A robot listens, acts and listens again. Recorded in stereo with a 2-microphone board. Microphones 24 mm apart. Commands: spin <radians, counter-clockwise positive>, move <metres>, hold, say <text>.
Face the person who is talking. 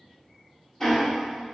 hold
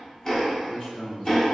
spin 0.87
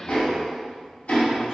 hold
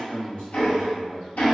spin 1.13
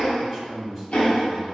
say Facing the man speaking.